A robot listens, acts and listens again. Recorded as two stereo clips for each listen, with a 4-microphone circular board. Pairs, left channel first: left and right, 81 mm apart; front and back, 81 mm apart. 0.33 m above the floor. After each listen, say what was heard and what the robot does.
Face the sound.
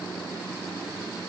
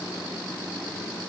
Keep listening.
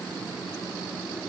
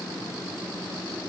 Keep listening.
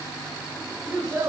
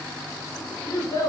The child speaking: 45° right. Turn 45° right.
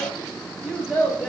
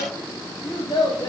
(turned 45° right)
Found it: a child speaking, straight ahead.